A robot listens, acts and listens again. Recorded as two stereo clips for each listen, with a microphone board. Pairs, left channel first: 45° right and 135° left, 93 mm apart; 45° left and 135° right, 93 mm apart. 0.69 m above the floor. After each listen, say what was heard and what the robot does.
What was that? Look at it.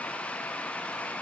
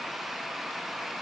Keep listening.
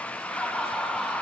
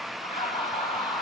The laughter: 35° left. Turn 35° left.
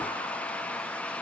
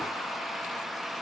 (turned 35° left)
Keep listening.
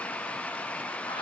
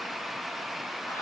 Keep listening.
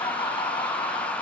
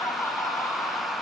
The laughter is now 20° right. Turn 20° right.
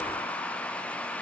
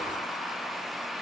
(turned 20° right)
Keep listening.
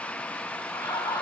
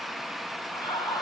Found it: laughter, straight ahead.